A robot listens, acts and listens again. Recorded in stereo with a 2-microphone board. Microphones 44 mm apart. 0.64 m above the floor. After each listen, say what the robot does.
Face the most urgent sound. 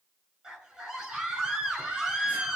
Turn 30° right.
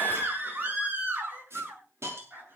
Turn 135° right.
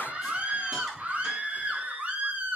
Turn 35° right.
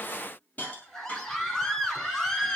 Turn 10° left.
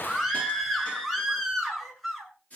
Facing the scream, over 4 m away.